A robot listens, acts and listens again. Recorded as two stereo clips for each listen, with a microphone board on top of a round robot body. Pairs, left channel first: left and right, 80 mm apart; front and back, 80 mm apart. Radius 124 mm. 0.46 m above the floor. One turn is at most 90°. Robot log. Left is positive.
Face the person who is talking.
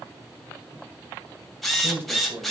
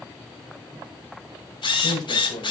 note: The man speaking: 35° right.
cmd yaw -35
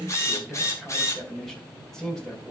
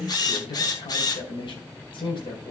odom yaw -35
end: Facing the man speaking, 2 to 4 m away.